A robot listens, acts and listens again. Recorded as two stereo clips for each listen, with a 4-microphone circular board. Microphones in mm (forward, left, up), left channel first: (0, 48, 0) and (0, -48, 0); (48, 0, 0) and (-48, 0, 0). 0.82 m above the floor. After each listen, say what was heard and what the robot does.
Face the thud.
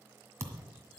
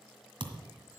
The thud: 150° right. Turn 150° right.
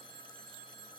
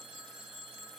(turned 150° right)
I heard a thud from this way, but can't make it out now.